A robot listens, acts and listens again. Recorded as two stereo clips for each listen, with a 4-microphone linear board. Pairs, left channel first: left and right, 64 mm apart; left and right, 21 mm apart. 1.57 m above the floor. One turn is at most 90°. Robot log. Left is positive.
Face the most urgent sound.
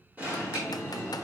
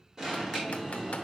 note: The alarm: about 25° right or 155° right.
cmd yaw -25
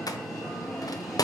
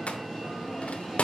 end: Facing the alarm.